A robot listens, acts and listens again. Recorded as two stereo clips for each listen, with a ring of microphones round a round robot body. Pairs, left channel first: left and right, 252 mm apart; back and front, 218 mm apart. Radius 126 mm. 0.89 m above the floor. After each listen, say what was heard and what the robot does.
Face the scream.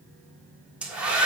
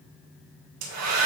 Keep listening.
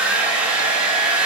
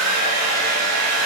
Keep listening.
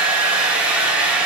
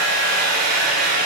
I can't make out a scream to turn to.